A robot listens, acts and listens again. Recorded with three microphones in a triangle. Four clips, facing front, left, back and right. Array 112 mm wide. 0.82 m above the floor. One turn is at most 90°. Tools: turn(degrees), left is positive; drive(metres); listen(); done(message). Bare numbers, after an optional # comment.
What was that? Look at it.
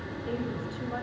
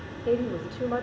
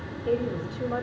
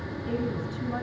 # The woman speaking: 120° left.
turn(90)
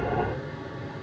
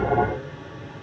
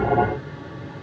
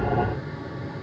# Nothing new. It was at 30° left.
turn(30)
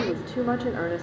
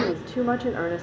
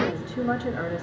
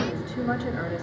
# The woman speaking is now 60° left.
turn(60)
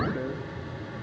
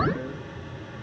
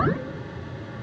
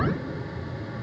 listen()
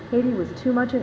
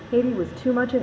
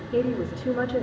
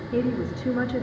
# The woman speaking is now 50° left.
turn(50)
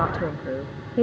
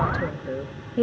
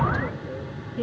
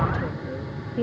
# The woman speaking is now 35° left.
turn(35)
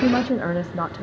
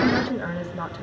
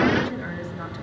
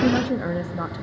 done("Found it: a woman speaking, straight ahead.")